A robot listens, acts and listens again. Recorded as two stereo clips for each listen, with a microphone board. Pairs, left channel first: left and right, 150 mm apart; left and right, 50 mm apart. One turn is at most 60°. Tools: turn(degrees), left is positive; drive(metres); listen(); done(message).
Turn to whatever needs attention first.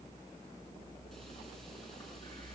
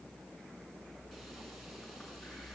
listen()
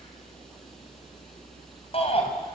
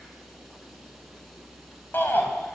turn(degrees=40)
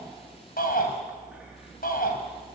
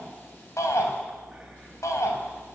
turn(degrees=60)
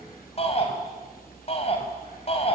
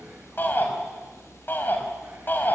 turn(degrees=45)
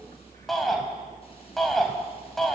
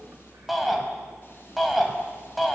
done("Found it: a shout, straight ahead.")